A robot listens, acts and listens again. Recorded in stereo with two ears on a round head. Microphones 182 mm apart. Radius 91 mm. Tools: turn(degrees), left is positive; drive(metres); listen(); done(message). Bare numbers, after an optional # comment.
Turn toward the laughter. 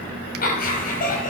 # The laughter: about 45° left or 135° left.
turn(45)
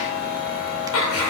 # So it is at 100° left.
turn(100)
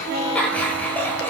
# The laughter is now 10° left.
turn(10)
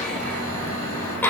# The laughter is now 10° left.
turn(10)
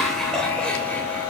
done("Facing the laughter.")